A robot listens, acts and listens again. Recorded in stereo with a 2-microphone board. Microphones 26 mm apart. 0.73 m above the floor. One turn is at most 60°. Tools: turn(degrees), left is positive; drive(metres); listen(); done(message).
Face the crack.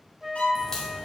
turn(degrees=25)
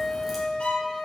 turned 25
listen()
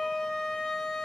done("I heard a crack, but can't make it out now. It was about straight ahead or 130° left.")